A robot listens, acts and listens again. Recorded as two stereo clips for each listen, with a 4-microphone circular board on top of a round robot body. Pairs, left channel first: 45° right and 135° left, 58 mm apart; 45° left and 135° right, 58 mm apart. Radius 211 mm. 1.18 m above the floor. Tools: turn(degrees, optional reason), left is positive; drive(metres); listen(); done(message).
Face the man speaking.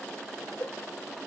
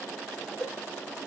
listen()
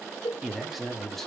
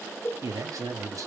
turn(degrees=-130, reason="The man speaking: 130° right.")
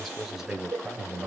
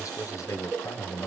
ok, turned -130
turn(degrees=70, reason="The man speaking is now 70° left.")
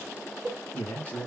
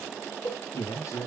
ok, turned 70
turn(degrees=20, reason="The man speaking is now 20° left.")
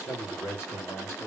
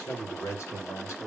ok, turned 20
turn(degrees=10, reason="The man speaking is now 10° left.")
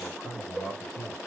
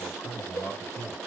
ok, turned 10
done("Found it: a man speaking, straight ahead.")